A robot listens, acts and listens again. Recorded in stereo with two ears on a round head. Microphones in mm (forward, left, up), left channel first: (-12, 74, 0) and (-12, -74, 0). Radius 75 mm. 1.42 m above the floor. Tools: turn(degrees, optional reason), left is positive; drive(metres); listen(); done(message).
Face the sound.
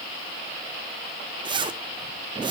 turn(degrees=-30, reason="The zipper: about 30° right or 150° right.")
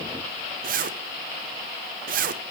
turn(degrees=-120, reason="So it is at 120° right.")
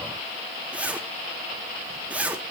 turn(degrees=-10, reason="The zipper is now 10° right.")
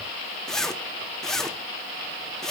done("Found it: a zipper, straight ahead.")